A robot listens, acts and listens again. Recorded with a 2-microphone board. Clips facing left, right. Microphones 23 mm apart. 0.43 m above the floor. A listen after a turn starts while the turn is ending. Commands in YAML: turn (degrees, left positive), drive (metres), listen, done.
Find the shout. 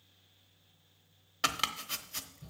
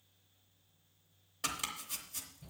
turn: 35
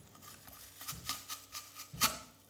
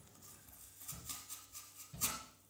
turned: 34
done: "Found it: a shout, straight ahead."